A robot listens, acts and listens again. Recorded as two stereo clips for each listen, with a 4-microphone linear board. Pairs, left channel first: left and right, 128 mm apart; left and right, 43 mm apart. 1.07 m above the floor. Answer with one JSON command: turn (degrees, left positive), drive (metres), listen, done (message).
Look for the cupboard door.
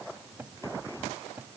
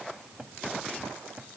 {"turn": -15}
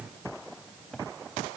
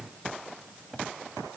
{"done": "Found it: a cupboard door, straight ahead."}